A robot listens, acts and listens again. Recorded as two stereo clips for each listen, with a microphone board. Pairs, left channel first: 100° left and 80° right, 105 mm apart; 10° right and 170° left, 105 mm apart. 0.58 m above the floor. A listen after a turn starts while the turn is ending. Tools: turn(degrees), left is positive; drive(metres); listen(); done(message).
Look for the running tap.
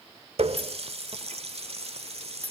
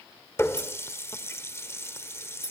turn(degrees=-75)
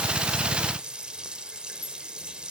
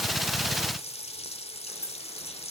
done("Found it: a running tap, straight ahead.")